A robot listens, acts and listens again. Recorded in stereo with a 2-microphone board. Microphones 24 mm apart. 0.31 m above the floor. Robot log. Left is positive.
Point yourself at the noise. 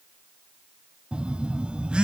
note: The phone buzzing: about 40° right or 140° right.
cmd yaw -40
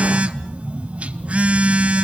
note: So it is at 95° right.
cmd yaw -95
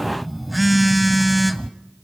end: Found it: a phone buzzing, straight ahead.